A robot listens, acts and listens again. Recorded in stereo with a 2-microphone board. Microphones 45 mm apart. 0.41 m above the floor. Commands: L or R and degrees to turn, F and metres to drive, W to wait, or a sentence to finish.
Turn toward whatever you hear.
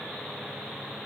W
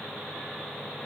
W
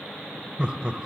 R25
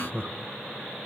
R125
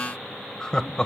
L20
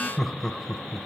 Facing the laughter, 1 to 2 m away.